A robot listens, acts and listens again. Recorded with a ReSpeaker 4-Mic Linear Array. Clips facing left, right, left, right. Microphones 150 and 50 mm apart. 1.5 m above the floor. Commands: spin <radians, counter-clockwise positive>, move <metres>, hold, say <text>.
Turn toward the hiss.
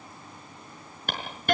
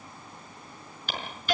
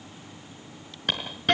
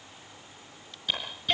spin 0.96
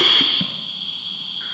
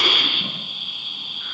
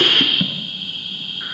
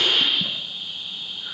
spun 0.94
spin 1.13
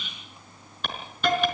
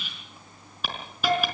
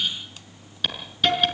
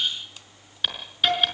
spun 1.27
say Found it: a hiss, straight ahead.